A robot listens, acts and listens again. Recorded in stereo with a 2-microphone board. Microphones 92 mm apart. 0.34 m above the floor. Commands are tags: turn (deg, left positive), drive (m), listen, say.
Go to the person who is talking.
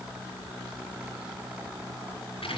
<listen/>
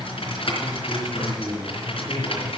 <turn deg="40"/>
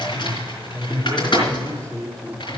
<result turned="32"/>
<turn deg="10"/>
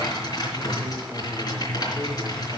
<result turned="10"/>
<listen/>
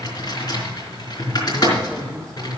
<listen/>
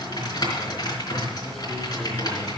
<say>Facing where the man speaking came from. I can't hear it now. I did not reach it.</say>